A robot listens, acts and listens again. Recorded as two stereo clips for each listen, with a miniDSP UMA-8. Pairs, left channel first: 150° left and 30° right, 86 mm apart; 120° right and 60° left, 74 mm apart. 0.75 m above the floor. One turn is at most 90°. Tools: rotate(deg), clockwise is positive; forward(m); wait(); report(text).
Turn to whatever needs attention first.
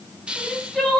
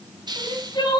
rotate(90)
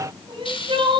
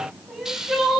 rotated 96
rotate(30)
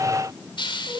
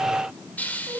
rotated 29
report("Facing the crying.")